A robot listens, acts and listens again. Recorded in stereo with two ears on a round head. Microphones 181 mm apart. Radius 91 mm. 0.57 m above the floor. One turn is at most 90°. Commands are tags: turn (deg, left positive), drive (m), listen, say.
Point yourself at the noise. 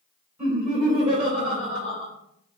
<turn deg="-30"/>
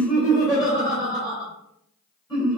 <turn deg="25"/>
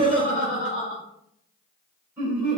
<say>Found it: laughter, straight ahead.</say>